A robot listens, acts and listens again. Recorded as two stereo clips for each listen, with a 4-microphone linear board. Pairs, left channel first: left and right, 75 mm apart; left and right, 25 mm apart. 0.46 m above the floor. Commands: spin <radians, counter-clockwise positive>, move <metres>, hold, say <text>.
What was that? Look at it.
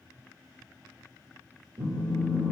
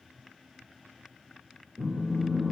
spin -1.57
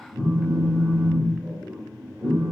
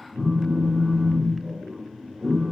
say Found it: a phone buzzing, straight ahead.